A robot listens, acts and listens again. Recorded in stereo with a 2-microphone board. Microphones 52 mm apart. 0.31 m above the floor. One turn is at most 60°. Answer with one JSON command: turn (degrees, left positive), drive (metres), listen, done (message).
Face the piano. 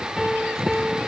{"turn": 30}
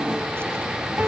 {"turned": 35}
{"turn": -35}
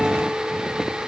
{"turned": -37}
{"listen": true}
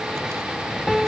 {"done": "Found it: a piano, straight ahead."}